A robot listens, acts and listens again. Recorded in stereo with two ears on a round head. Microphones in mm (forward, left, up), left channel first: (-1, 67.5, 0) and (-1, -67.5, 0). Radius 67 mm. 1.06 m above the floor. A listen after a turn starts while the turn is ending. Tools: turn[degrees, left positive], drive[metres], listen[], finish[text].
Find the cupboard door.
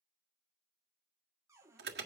Thought: The cupboard door: about 20° right or 160° right.
Action: turn[-20]
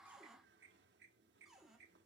Action: finish[Found it: a cupboard door, straight ahead.]